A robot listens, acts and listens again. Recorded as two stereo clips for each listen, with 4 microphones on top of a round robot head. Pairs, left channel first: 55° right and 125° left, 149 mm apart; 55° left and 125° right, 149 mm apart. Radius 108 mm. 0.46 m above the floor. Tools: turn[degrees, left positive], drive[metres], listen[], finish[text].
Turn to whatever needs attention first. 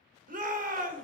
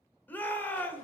Thought: The shout: 130° left.
Action: turn[130]
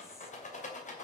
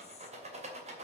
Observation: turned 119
Thought: Nothing new. It was at 15° left.
Action: turn[15]
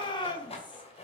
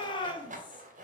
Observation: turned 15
Action: finish[Facing the shout, 2 to 4 m away.]